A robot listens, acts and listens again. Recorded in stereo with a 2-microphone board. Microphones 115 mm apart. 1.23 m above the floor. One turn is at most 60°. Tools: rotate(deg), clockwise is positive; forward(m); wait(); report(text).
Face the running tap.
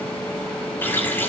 rotate(-20)
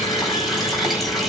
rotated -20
report("Facing the running tap.")